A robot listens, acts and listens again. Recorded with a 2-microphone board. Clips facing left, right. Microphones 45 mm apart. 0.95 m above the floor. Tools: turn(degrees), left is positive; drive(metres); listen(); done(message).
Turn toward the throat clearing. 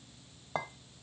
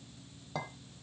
listen()
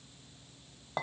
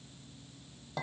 listen()
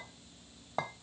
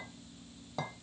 done("I can't make out throat clearing to turn to.")